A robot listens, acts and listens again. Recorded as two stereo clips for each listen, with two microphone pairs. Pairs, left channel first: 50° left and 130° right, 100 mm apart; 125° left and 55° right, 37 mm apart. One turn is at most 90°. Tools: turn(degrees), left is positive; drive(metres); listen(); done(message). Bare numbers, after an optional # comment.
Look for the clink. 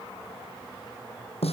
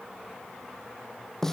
listen()
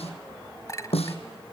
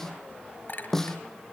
# The clink: 105° left.
turn(90)
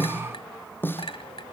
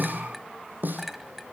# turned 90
# The clink is now 35° left.
turn(35)
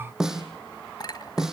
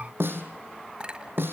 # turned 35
# The clink is now 10° left.
turn(10)
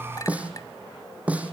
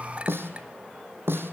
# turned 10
listen()
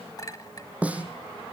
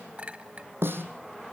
done("Found it: a clink, straight ahead.")